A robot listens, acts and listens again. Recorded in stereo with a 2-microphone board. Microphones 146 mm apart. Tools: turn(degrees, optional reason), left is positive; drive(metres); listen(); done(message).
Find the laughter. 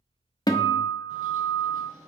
listen()
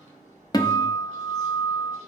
listen()
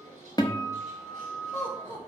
turn(degrees=15, reason="The laughter: about 15° left or 165° left.")
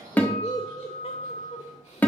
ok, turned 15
turn(degrees=135, reason="So it is at 135° left.")
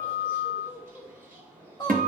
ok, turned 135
turn(degrees=30, reason="The laughter is now 30° left.")
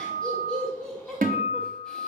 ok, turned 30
done("Found it: laughter, straight ahead.")